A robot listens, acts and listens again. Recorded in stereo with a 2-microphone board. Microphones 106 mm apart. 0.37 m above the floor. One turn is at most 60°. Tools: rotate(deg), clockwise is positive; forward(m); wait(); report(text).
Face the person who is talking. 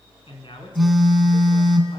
rotate(-55)
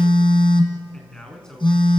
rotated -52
rotate(-10)
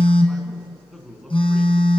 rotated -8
report("Facing the man speaking.")